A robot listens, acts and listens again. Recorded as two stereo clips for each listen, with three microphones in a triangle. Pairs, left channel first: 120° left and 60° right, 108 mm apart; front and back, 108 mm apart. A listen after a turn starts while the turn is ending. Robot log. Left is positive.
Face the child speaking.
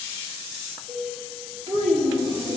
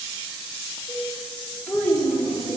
note: The child speaking: 70° right.
cmd yaw -70
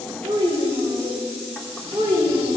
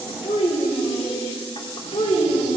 note: The child speaking is now 20° right.
cmd yaw -20
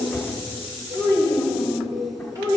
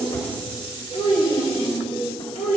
end: Found it: a child speaking, straight ahead, 2 to 4 m away.